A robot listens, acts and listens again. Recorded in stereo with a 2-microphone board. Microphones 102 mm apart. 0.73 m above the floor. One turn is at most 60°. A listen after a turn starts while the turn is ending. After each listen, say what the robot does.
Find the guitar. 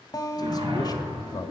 Turn 40° left.
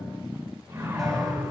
Keep listening.
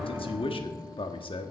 Keep listening.
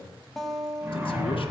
Found it: a guitar, straight ahead, 1 to 2 m away.